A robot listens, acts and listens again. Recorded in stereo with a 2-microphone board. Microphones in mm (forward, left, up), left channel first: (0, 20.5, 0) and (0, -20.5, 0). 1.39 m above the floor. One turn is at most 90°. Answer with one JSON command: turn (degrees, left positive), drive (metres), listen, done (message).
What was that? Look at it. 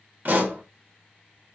{"turn": -50}
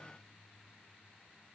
{"listen": true}
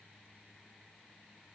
{"done": "I heard a pop, but can't make it out now. It was about straight ahead or 80° right."}